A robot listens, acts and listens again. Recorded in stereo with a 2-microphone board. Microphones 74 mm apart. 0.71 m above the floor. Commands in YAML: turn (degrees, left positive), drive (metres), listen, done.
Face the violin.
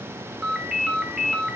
listen: true
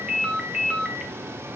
listen: true
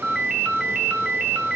done: "I can't make out a violin to turn to."